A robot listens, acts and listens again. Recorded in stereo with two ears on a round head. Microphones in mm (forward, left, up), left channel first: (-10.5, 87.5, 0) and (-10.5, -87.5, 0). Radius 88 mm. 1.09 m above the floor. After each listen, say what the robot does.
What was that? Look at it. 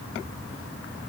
Keep listening.
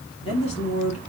Turn 35° left.
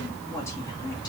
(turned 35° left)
Turn 20° left.
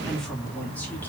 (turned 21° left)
Found it: a woman speaking, straight ahead, 1 to 2 m away.